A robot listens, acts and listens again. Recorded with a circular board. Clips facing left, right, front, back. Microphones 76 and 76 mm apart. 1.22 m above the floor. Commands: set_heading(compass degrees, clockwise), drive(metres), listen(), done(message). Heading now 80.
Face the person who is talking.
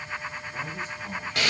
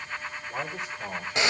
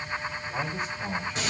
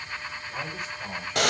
set_heading(155)
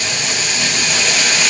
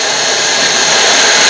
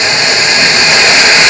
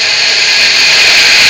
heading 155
listen()
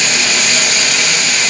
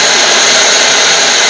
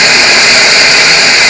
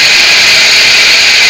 listen()
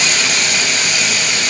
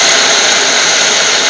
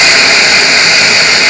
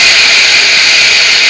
done("Facing where the man speaking came from. I can't hear it now.")